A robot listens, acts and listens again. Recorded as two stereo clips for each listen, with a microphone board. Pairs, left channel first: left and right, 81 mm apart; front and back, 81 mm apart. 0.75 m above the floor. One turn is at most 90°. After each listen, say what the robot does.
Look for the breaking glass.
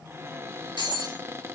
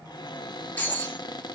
Turn 70° right.
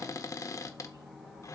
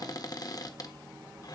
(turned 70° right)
I heard breaking glass from this way, but can't make it out now.